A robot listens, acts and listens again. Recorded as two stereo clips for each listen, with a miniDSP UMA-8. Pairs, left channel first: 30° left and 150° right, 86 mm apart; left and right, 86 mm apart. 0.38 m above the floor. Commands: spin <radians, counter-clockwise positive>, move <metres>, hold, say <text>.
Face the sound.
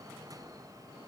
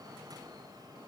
hold
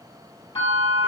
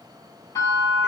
spin 0.61
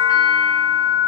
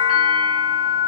say Found it: a bell, straight ahead, 1 to 2 m away.